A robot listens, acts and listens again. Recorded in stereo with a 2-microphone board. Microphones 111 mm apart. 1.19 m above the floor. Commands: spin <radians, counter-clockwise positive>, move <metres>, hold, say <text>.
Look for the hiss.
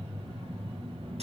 hold
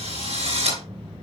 hold
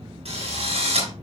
say I can't make out a hiss, only a drill.